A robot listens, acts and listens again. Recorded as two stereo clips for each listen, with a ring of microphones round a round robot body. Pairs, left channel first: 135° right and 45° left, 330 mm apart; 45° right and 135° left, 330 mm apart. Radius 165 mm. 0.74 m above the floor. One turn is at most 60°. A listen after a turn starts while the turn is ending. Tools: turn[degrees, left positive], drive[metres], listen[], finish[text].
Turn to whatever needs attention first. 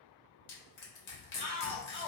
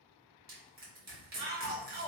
Thought: The shout: 150° left.
Action: turn[60]
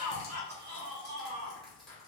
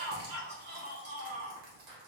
Thought: The shout is now 90° left.
Action: turn[60]
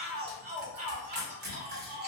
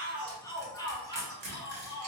Thought: The shout is now 35° left.
Action: turn[35]
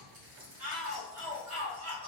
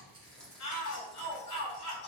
Action: finish[Facing the shout.]